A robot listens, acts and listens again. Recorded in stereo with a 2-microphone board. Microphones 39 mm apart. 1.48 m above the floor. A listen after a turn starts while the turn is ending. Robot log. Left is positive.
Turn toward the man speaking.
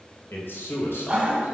note: The man speaking: about 75° left or 105° left.
cmd yaw +75
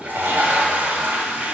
cmd idle
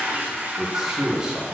note: So it is at 20° right.
cmd yaw -20
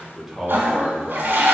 note: The man speaking is now 20° right.
cmd yaw -20
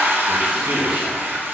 cmd idle
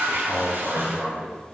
note: The man speaking is now 15° right.
cmd yaw -15
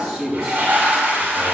end: Facing the man speaking.